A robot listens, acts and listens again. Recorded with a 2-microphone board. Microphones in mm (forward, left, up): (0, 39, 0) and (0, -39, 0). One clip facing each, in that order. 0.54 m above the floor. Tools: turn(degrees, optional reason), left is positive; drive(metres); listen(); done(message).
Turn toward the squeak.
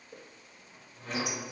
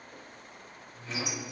turn(degrees=50, reason="The squeak: about 50° left or 130° left.")
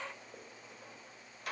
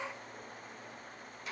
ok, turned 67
turn(degrees=60, reason="So it is at 60° left.")
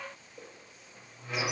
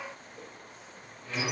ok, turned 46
turn(degrees=15, reason="The squeak is now 15° left.")
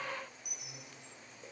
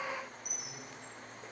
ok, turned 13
done("Facing the squeak, 1 to 2 m away.")